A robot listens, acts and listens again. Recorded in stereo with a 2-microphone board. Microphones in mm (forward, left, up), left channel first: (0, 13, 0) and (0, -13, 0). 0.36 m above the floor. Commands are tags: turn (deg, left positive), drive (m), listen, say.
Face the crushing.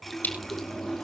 <turn deg="90"/>
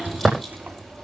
<say>Found it: crushing, straight ahead.</say>